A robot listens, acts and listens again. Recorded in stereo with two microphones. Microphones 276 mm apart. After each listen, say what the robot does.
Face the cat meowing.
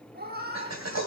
Turn 35° right.
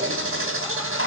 Keep listening.
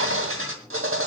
Keep listening.
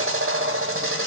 I heard a cat meowing, but can't make it out now. It was about straight ahead or 110° right.